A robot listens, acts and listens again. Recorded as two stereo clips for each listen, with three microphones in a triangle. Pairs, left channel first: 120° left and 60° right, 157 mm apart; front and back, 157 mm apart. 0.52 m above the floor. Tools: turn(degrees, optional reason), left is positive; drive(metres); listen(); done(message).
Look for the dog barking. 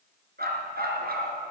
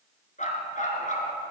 turn(degrees=-40, reason="The dog barking: 40° right.")
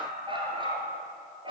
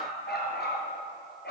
done("Found it: a dog barking, straight ahead.")